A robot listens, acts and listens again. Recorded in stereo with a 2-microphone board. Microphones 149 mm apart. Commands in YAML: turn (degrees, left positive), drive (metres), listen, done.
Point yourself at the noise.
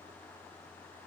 listen: true
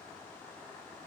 listen: true
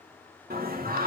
turn: -90
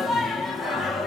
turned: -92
done: "Facing the singing."